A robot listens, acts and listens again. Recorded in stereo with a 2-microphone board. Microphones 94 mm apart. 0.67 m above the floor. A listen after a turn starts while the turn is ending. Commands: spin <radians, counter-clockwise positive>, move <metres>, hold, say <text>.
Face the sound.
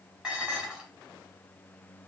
spin -0.52
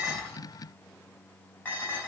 spin 0.44
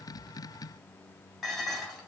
say Facing the dishes clattering, 2 to 4 m away.